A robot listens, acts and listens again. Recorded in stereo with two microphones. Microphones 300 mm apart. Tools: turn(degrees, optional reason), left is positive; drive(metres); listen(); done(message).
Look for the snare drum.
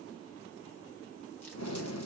listen()
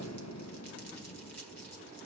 listen()
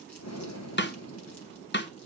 turn(degrees=40, reason="The snare drum: about 40° left or 140° left.")
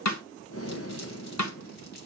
turn(degrees=100, reason="So it is at 100° left.")
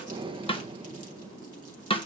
turn(degrees=20, reason="The snare drum is now 20° left.")
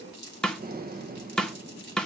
done("Facing the snare drum.")